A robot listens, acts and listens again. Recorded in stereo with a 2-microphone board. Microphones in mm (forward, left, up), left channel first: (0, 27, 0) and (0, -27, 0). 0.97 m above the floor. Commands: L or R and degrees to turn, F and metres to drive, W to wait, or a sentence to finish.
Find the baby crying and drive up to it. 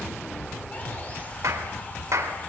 W
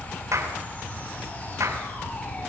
W
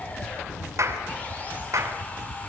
I can't make out a baby crying, only sawing and a clap.